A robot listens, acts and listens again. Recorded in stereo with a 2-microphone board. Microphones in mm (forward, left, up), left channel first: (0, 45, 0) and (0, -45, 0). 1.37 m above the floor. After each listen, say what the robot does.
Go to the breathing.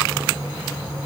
Keep listening.
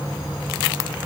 Keep listening.
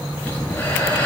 Turn 20° left.
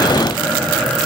Drive 1.0 m forward.
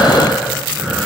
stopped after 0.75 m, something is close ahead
Something is in my way. I am facing the breathing but have not reached it.